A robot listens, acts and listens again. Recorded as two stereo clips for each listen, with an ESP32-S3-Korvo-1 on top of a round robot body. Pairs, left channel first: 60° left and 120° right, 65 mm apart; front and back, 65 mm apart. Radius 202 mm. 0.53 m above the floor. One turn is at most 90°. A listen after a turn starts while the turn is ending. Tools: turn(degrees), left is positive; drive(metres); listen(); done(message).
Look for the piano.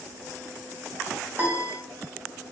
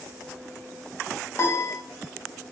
turn(degrees=-60)
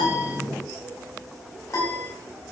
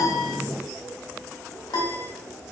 turn(degrees=15)
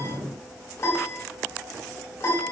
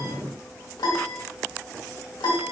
done("Facing the piano.")